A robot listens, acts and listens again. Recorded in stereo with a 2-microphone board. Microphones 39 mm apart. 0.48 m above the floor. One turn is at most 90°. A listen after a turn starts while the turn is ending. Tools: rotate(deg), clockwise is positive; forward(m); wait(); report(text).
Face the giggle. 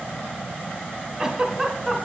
rotate(30)
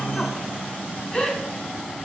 rotate(-20)
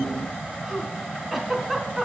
report("Found it: a giggle, straight ahead.")